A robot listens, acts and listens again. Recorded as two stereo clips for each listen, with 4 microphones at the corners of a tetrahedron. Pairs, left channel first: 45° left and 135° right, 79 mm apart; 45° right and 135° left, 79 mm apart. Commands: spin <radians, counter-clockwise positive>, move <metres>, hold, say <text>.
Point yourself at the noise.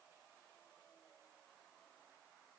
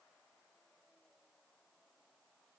hold
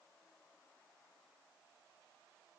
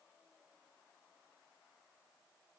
hold
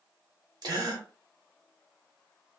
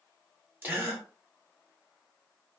spin -2.79
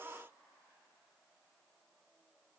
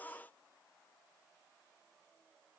say Facing where the gasp came from. I can't hear it now.